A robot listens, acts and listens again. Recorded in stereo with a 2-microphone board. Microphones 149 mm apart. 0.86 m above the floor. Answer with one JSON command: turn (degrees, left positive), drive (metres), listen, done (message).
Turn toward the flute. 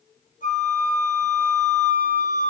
{"turn": 60}
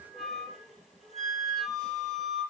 {"done": "Facing the flute."}